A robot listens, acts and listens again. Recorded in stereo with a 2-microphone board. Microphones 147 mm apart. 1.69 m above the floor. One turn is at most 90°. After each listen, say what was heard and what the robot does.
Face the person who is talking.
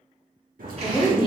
The woman speaking: about 35° left or 145° left. Turn 35° left.
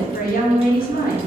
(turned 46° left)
So it is at 100° left. Turn 90° left.
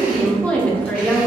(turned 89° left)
The woman speaking is now 10° left. Turn 10° left.
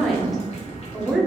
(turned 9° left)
Facing the woman speaking, under 1 m away.